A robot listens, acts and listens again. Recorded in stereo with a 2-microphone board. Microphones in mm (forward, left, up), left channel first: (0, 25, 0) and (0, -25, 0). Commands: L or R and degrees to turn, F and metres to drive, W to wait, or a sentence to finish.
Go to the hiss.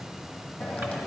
L20
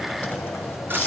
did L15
L145
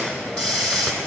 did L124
L25
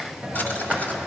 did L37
R15
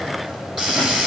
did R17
F1.0
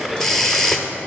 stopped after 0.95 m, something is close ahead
L10
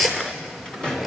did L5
I am next to the hiss.